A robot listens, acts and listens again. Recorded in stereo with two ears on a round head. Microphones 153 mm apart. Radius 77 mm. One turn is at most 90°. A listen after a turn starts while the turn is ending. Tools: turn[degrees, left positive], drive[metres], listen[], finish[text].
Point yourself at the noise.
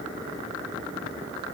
Action: listen[]
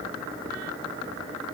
Action: listen[]
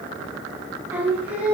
Action: turn[-30]
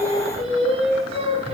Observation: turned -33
Thought: So it is at 145° right.
Action: turn[-90]
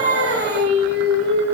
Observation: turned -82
Thought: The singing is now 65° right.
Action: turn[-65]
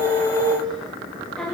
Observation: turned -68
Action: finish[Facing the singing.]